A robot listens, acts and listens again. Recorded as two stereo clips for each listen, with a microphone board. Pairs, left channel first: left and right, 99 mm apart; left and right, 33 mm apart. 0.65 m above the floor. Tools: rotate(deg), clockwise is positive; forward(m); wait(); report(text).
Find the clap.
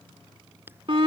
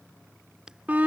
rotate(20)
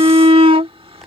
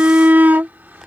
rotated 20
wait()
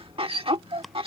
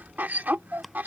wait()
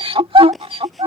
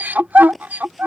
report("Facing the clap.")